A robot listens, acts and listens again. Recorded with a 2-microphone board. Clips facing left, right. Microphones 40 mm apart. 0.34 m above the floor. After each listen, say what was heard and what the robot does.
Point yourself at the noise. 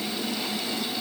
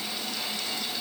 Keep listening.
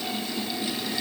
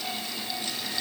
Keep listening.
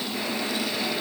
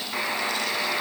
The buzzer: about 65° right or 115° right. Turn 65° right.
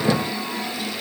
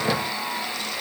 So it is at 30° right. Turn 30° right.
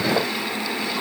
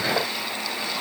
Facing the buzzer, 2 to 4 m away.